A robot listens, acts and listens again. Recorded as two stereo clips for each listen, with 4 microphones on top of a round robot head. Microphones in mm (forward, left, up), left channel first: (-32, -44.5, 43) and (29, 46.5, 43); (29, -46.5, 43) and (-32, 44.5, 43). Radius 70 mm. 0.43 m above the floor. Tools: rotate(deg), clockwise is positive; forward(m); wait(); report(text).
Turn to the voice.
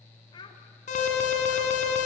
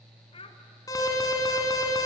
rotate(85)
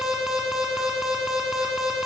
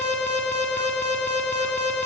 wait()
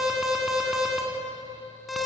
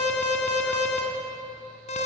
wait()
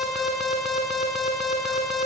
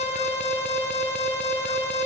report("I heard a child speaking from this way, but can't make it out now.")